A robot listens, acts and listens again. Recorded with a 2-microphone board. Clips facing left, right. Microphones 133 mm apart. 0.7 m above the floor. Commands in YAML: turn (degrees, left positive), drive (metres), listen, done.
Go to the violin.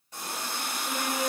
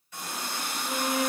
turn: 35
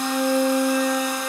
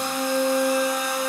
drive: 1.0
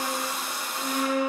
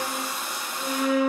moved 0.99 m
drive: 1.0
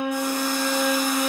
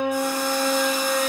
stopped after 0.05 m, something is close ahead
done: "I am next to the violin."